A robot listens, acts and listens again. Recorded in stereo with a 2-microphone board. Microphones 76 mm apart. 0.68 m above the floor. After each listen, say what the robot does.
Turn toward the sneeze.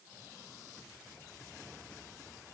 Keep listening.
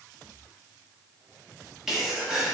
Turn 30° right.
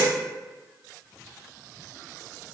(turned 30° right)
Keep listening.
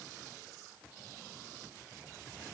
I heard a sneeze, but can't make it out now. It was about 25° left or 145° right.